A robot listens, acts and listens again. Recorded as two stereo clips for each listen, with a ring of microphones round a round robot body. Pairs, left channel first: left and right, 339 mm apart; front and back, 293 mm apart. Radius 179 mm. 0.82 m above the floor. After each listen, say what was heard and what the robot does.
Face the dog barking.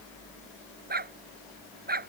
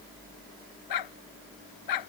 The dog barking: 25° right. Turn 25° right.
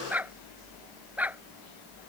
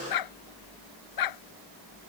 Facing the dog barking.